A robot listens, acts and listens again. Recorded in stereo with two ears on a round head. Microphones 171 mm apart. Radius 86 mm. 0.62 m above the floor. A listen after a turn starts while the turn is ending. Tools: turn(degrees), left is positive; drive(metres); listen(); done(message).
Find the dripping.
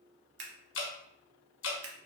turn(degrees=70)
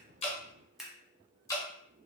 turn(degrees=20)
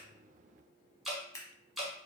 done("Facing the dripping, 1 to 2 m away.")